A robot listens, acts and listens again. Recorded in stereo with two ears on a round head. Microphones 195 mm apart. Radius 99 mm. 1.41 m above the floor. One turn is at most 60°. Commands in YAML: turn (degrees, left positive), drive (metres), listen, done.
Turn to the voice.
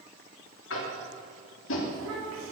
turn: -60
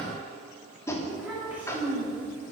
turn: -10
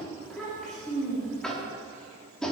done: "Found it: a child speaking, straight ahead, 2 to 4 m away."